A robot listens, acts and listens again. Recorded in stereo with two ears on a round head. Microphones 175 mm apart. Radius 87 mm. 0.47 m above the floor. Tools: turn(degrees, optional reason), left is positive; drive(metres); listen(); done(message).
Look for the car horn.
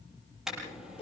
turn(degrees=-30)
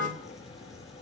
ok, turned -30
listen()
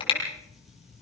turn(degrees=30, reason="So it is at 30° left.")
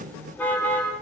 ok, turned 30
turn(degrees=10, reason="The car horn is now 10° left.")
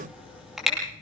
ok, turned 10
done("Found it: a car horn, straight ahead, over 4 m away.")